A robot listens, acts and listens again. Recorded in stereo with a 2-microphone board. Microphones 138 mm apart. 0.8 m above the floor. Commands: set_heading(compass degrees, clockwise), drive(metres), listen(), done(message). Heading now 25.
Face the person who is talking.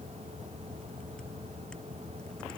listen()
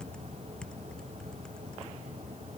listen()
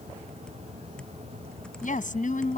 set_heading(310)
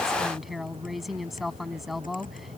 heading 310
done("Found it: a woman speaking, straight ahead.")